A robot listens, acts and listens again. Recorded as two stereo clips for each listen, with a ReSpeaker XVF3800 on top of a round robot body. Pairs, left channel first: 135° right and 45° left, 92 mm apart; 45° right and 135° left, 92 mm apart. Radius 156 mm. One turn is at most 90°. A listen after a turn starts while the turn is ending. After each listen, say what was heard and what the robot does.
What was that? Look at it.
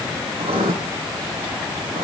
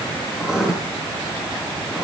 The writing: 50° left. Turn 50° left.
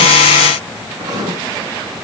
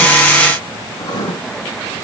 Facing the writing, over 4 m away.